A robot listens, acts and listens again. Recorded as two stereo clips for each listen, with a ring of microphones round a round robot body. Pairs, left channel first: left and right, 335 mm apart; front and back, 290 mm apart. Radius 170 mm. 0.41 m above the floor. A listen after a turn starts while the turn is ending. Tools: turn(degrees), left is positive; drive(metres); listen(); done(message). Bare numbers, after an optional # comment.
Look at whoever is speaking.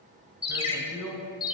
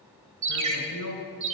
# The man speaking: 10° right.
turn(-10)
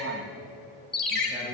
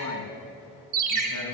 done("Facing the man speaking, 2 to 4 m away.")